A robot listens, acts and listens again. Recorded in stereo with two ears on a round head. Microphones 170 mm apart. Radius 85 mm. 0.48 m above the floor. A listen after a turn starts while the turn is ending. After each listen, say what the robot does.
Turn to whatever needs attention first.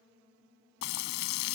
Keep listening.
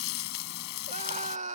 Turn 40° right.
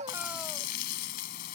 Keep listening.
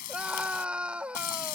Turn 10° right.
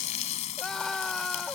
Facing the scream.